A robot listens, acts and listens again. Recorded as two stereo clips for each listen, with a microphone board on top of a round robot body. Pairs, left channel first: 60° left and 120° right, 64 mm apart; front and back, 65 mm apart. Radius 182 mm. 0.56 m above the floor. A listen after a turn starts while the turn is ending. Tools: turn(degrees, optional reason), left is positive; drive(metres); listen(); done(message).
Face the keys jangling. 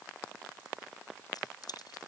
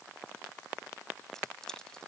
turn(degrees=80, reason="The keys jangling: 80° left.")
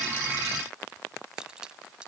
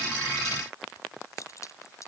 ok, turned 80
turn(degrees=-45, reason="The keys jangling is now 45° right.")
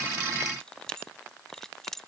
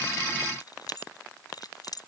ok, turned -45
turn(degrees=-25, reason="The keys jangling is now 25° right.")
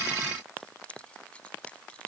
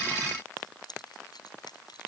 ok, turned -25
turn(degrees=-15, reason="The keys jangling is now 15° right.")
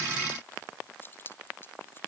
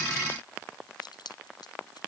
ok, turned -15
done("Found it: keys jangling, straight ahead.")